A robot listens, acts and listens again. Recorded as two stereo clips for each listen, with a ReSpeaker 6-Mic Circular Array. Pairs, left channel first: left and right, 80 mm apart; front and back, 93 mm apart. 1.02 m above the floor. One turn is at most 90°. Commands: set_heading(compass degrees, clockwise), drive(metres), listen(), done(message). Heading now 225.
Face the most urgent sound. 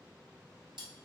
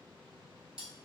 listen()
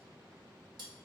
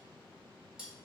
listen()
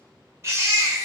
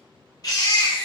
set_heading(265)
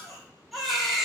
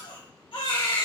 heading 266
done("Facing the baby crying.")